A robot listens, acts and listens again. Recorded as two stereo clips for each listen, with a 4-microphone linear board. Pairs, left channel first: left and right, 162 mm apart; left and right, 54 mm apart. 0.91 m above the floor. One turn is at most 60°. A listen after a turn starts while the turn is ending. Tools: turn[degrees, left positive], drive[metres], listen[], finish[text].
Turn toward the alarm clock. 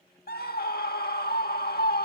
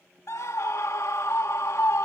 Action: listen[]
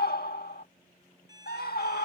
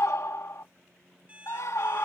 Thought: The alarm clock: about 25° right or 155° right.
Action: turn[-25]
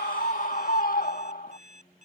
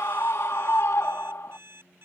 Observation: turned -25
Thought: So it is at 130° right.
Action: turn[-60]
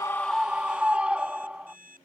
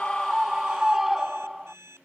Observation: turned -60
Thought: The alarm clock is now 60° right.
Action: turn[-60]
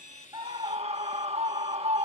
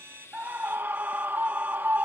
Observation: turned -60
Action: listen[]
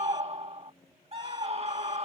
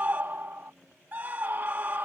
Action: listen[]
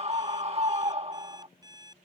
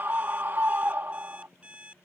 Thought: The alarm clock is now 25° right.
Action: turn[-25]
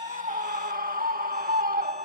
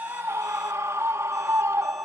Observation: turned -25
Action: listen[]
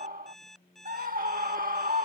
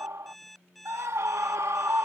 Action: finish[Found it: an alarm clock, straight ahead.]